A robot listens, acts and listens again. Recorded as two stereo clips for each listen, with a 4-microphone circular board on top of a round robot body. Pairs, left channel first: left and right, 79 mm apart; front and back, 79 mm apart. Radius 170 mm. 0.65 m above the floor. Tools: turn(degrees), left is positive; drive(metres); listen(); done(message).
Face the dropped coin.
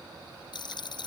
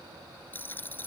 turn(degrees=65)
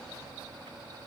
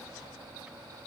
done("I heard a dropped coin from this way, but can't make it out now.")